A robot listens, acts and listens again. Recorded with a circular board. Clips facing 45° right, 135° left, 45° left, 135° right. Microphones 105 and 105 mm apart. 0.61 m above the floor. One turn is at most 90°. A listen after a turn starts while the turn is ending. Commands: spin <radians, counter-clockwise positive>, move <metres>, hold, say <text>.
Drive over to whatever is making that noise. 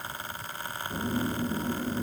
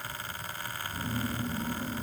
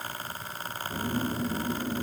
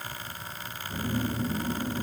spin -0.35
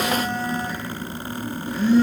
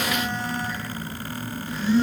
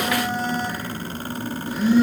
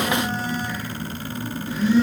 move 1.0
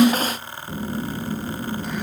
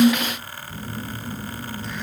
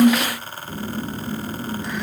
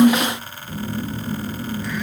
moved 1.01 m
spin -0.35
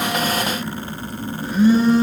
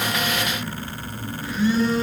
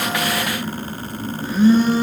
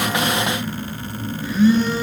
move 1.0
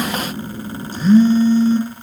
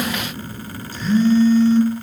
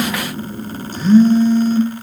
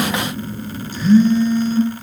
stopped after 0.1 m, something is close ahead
say I am next to the phone buzzing.